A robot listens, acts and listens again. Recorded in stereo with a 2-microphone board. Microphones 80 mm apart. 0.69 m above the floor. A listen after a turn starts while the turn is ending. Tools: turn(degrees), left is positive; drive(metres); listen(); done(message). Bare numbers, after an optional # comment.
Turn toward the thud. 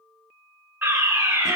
listen()
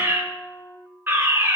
listen()
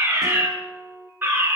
done("I can't make out a thud to turn to.")